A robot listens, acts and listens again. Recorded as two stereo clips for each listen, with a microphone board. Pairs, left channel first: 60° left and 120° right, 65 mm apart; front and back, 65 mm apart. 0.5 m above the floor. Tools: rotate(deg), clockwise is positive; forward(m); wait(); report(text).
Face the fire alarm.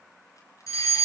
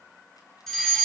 rotate(-85)
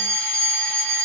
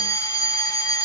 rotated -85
rotate(10)
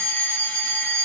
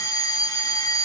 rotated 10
report("Facing the fire alarm.")